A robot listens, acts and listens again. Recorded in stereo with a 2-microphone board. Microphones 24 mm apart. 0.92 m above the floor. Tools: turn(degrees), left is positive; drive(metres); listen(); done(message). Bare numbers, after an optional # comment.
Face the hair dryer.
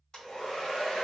# The hair dryer: about 30° left or 150° left.
turn(30)
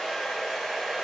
done("Facing the hair dryer, 1 to 2 m away.")